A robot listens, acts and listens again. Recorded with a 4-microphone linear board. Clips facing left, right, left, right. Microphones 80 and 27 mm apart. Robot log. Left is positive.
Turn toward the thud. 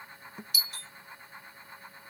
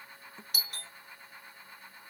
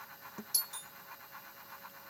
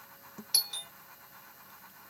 note: The thud: about 15° left or 165° left.
cmd yaw +15
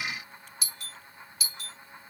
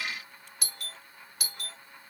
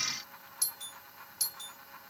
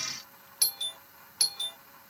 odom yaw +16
cmd idle
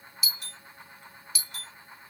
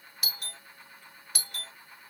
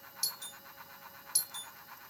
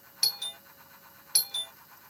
end: I heard a thud, but can't make it out now. It was about straight ahead or 150° left.